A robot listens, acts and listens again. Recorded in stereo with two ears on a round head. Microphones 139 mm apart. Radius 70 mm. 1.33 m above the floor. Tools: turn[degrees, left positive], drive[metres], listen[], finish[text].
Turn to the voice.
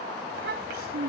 Thought: The child speaking: about 70° right or 110° right.
Action: turn[-70]
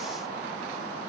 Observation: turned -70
Action: listen[]
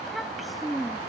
Action: finish[Facing the child speaking.]